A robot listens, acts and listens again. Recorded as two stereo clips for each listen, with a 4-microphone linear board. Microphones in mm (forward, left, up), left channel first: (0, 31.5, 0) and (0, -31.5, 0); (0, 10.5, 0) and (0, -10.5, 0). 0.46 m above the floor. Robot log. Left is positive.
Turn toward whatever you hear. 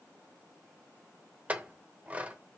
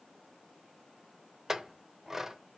note: The clink: about 25° right or 155° right.
cmd yaw -25
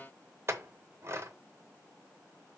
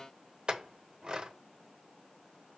note: So it is at 130° right.
cmd yaw -130
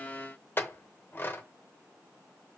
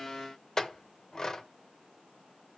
note: The clink is now 35° left.
cmd yaw +35
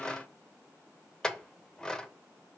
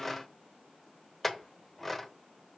note: The clink is now 10° left.
cmd yaw +10
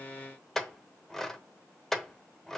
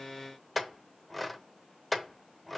end: Facing the clink, under 1 m away.